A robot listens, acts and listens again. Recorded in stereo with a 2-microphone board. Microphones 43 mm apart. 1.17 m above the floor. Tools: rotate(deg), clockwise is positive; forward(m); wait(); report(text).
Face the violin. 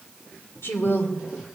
wait()
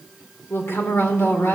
wait()
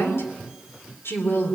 report("I can't make out a violin, only a woman speaking.")